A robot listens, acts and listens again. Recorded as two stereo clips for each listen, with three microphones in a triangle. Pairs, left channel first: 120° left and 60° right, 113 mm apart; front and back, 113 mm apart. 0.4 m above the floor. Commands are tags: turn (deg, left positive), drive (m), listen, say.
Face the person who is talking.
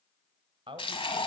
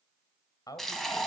<turn deg="-45"/>
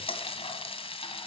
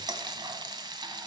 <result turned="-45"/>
<listen/>
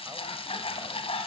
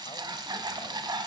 <listen/>
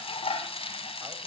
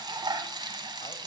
<say>I heard a man speaking from this way, but can't make it out now.</say>